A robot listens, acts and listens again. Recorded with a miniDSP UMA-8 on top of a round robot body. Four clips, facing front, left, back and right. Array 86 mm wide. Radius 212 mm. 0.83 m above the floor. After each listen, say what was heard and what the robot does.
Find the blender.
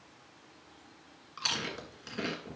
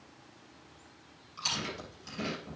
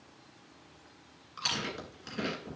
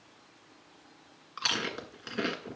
Keep listening.
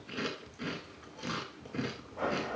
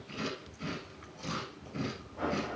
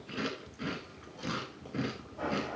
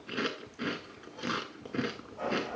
The blender: 15° left. Turn 15° left.
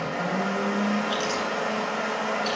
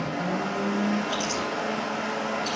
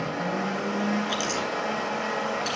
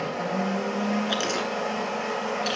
Found it: a blender, straight ahead, over 4 m away.